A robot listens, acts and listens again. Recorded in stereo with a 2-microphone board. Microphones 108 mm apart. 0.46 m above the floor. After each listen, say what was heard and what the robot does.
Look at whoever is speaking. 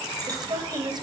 The woman speaking: about 45° right or 135° right. Turn 45° right.
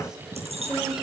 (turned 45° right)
Found it: a woman speaking, straight ahead.